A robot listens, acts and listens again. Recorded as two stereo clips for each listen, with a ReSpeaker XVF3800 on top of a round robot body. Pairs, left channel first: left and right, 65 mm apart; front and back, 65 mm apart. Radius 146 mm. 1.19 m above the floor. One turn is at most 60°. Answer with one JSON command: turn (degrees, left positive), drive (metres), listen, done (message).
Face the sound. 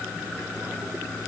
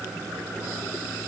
{"listen": true}
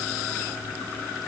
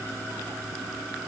{"listen": true}
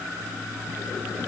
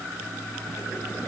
{"done": "I can't make out anything to turn to."}